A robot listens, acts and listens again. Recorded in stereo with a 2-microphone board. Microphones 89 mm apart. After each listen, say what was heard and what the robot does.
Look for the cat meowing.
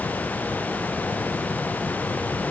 Keep listening.
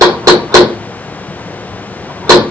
Keep listening.
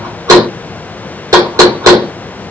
I can't make out a cat meowing to turn to.